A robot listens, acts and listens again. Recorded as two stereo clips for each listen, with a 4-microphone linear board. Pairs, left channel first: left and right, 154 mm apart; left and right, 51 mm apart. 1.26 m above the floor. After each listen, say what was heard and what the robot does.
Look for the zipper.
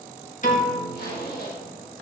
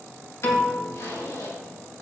Turn 90° left.
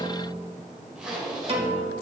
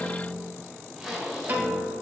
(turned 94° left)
Facing the zipper.